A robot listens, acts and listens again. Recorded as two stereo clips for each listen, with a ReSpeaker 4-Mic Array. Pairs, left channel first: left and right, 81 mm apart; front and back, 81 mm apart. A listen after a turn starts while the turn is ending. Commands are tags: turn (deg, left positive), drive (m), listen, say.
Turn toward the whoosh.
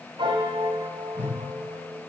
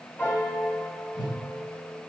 <turn deg="25"/>
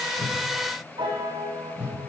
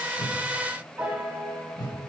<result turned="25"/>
<turn deg="-15"/>
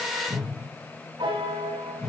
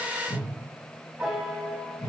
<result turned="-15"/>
<say>Facing the whoosh.</say>